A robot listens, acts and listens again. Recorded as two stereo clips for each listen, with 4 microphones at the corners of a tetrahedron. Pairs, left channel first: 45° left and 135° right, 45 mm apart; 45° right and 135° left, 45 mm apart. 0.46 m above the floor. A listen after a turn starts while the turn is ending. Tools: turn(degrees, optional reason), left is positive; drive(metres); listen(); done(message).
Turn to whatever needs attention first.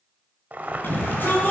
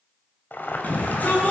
done("Found it: a shout, straight ahead.")